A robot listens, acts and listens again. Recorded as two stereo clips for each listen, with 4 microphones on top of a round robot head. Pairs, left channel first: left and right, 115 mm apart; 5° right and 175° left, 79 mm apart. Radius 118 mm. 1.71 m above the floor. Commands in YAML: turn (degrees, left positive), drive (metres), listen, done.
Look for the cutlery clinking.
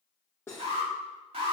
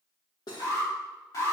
turn: 15
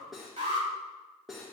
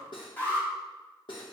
done: "Facing the cutlery clinking, 1 to 2 m away."